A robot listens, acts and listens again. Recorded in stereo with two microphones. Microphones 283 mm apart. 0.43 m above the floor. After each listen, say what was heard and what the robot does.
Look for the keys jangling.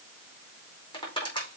Keep listening.
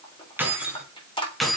Turn 30° left.
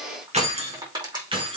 So it is at 15° right. Turn 15° right.
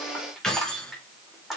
Facing the keys jangling.